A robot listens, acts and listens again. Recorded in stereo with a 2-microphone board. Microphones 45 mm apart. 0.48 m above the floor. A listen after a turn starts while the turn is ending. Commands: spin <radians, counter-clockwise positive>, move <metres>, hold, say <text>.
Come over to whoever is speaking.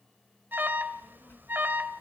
spin 0.87
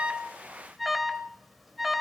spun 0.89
spin 1.31
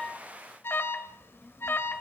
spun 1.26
move 1.0
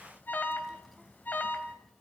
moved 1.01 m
move 1.0
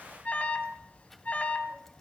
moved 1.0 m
move 1.0
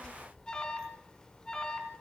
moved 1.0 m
spin 0.26
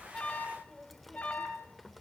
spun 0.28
move 1.0
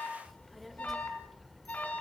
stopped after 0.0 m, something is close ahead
say I am next to the child speaking.